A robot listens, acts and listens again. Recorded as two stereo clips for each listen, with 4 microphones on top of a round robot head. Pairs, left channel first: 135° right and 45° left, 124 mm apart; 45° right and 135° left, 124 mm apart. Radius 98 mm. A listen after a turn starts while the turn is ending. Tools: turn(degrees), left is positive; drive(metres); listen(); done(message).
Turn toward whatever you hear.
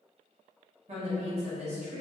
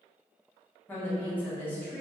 turn(degrees=25)
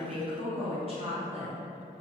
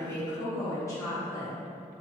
turn(degrees=15)
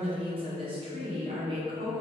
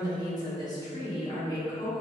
turn(degrees=10)
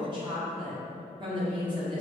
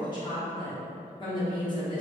done("Facing the woman speaking.")